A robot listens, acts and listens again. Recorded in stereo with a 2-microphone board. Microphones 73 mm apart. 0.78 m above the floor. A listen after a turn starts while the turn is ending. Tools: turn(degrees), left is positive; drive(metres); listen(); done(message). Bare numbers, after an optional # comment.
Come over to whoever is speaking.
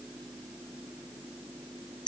listen()
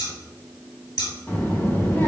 # The child speaking: about 30° left or 150° left.
turn(30)
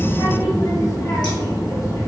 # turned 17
# So it is at 130° left.
turn(130)
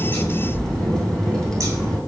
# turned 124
# The child speaking is now 10° left.
turn(10)
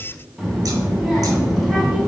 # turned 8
drive(1.0)
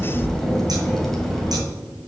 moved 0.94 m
drive(1.0)
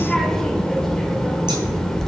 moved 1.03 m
drive(1.0)
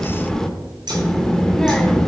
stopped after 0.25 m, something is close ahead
done("I am next to the child speaking.")